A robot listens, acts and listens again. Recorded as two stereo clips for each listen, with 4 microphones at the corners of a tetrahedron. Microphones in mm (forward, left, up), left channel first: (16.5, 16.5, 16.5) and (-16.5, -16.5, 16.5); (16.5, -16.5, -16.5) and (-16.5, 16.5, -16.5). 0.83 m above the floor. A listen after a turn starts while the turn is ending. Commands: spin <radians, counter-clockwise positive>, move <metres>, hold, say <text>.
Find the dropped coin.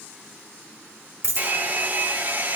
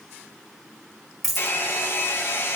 spin -2.36
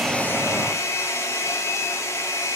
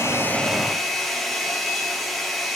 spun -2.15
spin -0.26
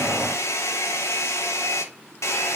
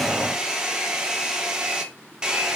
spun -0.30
say Facing where the dropped coin came from. I can't hear it now.